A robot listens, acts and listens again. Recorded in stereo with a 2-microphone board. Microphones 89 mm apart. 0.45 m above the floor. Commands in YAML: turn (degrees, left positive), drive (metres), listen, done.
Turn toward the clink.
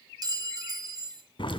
turn: -45
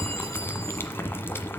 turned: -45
listen: true
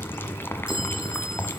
listen: true
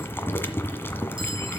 done: "I heard a clink, but can't make it out now. It was about straight ahead or 90° right."